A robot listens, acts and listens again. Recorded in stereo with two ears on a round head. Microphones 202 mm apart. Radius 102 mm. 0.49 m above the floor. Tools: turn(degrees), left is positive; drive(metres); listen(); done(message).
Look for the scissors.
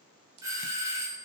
turn(degrees=-75)
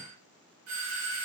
listen()
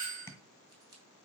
turn(degrees=-20)
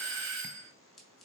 done("Facing the scissors, 2 to 4 m away.")